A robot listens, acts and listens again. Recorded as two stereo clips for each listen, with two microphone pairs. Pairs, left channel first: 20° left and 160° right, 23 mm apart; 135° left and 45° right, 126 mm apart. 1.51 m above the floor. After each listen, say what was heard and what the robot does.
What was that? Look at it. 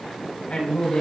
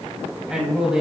The man speaking: 40° left. Turn 40° left.
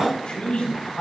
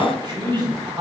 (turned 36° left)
Facing the man speaking.